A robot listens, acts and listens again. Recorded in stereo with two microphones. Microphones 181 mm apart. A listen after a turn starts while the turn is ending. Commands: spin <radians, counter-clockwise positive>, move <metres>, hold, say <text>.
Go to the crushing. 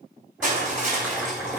spin -0.79
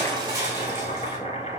hold
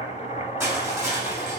spin -0.26
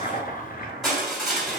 move 1.0
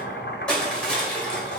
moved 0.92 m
spin 0.17
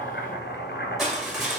move 1.0
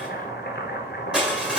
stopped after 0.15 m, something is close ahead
spin -0.17
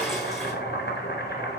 hold
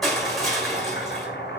say Arrived at the crushing, straight ahead.